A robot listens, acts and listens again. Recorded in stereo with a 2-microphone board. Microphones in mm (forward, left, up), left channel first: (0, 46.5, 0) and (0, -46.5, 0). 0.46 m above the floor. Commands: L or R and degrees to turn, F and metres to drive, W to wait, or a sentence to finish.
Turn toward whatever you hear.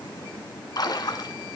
L50
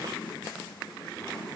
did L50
W
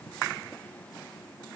I heard a splash, but can't make it out now. It was about straight ahead or 80° left.